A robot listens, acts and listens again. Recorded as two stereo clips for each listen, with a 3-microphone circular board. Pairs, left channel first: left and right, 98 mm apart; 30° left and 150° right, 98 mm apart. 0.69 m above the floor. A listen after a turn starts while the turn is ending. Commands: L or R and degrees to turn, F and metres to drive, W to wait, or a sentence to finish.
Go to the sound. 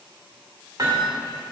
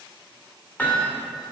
R40
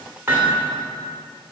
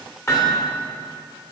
R25
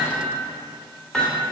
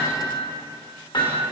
F1.0
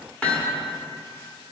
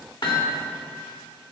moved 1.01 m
L15
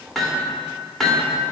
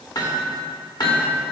F1.0
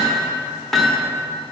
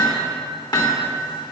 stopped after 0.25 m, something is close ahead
I am next to the hammering.